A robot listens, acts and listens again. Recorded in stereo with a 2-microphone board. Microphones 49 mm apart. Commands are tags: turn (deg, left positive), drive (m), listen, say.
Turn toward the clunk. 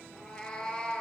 <listen/>
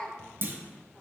<turn deg="-50"/>
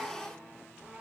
<listen/>
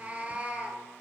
<say>I heard a clunk, but can't make it out now. It was about straight ahead or 80° right.</say>